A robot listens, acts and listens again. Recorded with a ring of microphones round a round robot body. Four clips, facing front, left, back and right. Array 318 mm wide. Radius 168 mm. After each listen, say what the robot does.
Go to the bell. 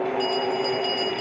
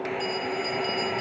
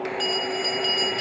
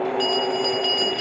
Turn 115° right.
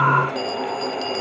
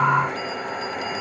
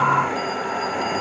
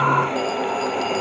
Turn 25° right.
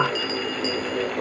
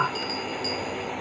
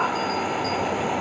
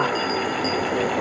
Drive 1.0 m forward.
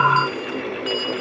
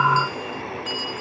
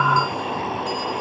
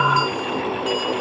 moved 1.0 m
Turn 10° right.
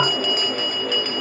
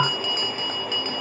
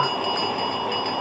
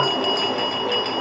Drive 1.0 m forward.
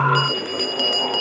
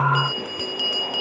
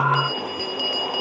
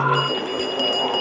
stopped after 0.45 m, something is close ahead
Arrived at the bell, straight ahead.